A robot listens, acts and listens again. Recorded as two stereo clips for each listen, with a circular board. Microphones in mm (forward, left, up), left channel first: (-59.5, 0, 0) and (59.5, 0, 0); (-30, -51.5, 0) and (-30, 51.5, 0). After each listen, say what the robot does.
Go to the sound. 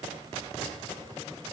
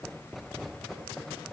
Keep listening.
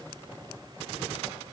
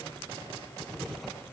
Keep listening.
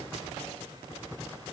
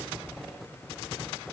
I can't make out anything to turn to.